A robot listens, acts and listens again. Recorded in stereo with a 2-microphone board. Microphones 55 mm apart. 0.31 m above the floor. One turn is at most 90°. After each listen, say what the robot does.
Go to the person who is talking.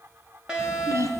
Turn 70° right.
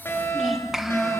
Drive 1.0 m forward.
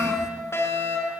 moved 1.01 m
Keep listening.
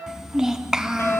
Turn 10° right.
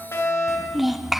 Drive 1.0 m forward.
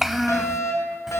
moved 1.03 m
Drive 1.0 m forward.
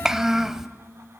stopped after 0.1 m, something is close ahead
Turn 10° right.
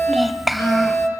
Arrived at the child speaking, straight ahead.